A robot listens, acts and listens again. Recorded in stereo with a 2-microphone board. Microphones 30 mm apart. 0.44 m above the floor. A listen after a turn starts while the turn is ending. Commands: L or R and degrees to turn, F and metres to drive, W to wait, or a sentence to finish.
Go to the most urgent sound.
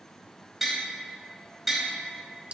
W
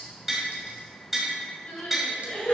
L55
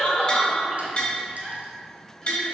L25
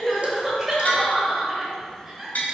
R10
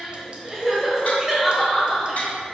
F1.0
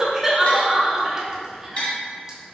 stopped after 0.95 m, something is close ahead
R15
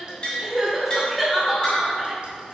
I am next to the crying.